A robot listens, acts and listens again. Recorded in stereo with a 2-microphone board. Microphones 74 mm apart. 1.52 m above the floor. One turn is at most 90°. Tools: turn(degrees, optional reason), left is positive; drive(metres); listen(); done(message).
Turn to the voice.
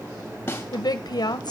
turn(degrees=60, reason="The woman speaking: about 60° left or 120° left.")
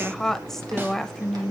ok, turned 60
done("Found it: a woman speaking, straight ahead, 1 to 2 m away.")